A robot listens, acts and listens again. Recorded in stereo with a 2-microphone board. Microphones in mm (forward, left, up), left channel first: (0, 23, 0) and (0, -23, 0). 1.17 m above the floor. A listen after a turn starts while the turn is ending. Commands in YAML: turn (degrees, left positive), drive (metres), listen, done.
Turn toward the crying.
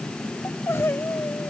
turn: 60
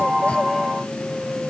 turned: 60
listen: true
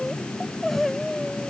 done: "Found it: crying, straight ahead."